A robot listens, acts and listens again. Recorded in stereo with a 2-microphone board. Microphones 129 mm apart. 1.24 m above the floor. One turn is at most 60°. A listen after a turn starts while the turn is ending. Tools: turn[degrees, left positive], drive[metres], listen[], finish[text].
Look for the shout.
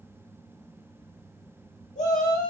Action: turn[60]
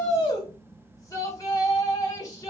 Thought: So it is at 25° left.
Action: turn[25]
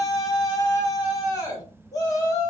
Thought: The shout is now 30° left.
Action: turn[30]
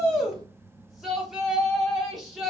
Action: finish[Facing the shout, 1 to 2 m away.]